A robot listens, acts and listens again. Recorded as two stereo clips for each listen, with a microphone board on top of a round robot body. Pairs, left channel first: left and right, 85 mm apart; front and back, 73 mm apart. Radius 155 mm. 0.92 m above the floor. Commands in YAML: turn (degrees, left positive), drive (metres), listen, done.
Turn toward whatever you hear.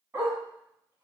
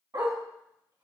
turn: -150
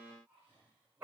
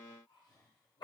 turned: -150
turn: -20
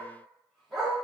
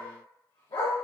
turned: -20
done: "Facing the dog barking, over 4 m away."